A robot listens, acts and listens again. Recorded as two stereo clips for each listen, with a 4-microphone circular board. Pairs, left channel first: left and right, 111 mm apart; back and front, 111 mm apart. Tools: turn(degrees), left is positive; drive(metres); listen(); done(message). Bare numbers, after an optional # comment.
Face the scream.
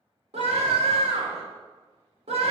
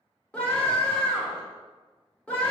# The scream: 100° right.
turn(-100)
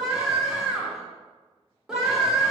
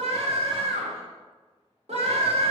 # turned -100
done("Found it: a scream, straight ahead, 2 to 4 m away.")